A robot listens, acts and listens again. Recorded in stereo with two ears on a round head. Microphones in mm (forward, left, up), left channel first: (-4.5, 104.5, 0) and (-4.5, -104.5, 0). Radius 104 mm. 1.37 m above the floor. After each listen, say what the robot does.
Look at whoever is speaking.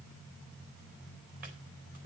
Keep listening.
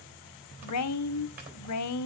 Turn 90° left.
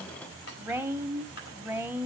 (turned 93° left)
Turn 10° right.
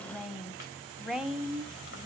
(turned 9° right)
Found it: a woman speaking, straight ahead.